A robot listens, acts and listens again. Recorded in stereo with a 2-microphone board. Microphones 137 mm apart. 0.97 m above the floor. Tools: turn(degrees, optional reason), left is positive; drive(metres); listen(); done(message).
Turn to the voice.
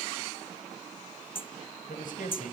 turn(degrees=90)
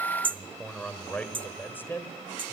turn(degrees=15, reason="So it is at 15° left.")
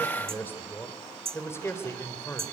turn(degrees=20, reason="The man speaking is now 20° left.")
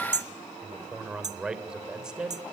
done("Found it: a man speaking, straight ahead, 2 to 4 m away.")